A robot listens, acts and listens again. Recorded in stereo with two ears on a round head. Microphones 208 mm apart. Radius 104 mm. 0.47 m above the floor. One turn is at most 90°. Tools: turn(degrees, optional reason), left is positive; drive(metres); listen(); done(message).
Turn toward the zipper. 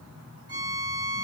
listen()
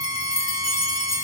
listen()
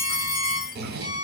turn(degrees=-45, reason="The zipper: about 45° right or 135° right.")
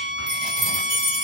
listen()
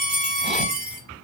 listen()
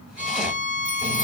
done("I heard a zipper, but can't make it out now. It was about straight ahead or 90° right.")